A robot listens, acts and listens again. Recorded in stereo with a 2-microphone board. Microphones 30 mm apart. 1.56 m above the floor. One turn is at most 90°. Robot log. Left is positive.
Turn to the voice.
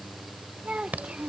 note: The child speaking: about 40° right or 140° right.
cmd yaw -40
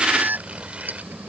cmd idle
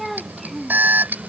end: Facing the child speaking.